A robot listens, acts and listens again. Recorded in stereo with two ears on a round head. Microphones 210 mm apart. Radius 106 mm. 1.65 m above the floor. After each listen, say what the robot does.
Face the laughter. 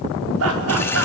Turn 75° right.
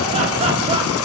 Keep listening.
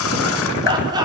Turn 15° right.
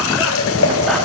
Keep listening.
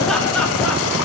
Keep listening.
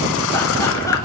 I heard laughter from this way, but can't make it out now.